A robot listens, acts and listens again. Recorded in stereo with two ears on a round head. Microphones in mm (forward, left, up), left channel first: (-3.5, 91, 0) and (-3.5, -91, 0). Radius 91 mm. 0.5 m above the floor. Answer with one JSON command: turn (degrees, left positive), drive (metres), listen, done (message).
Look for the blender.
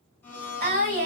{"turn": 30}
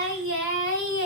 {"listen": true}
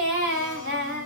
{"listen": true}
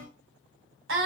{"done": "I heard a blender, but can't make it out now. It was about 20° right or 140° left."}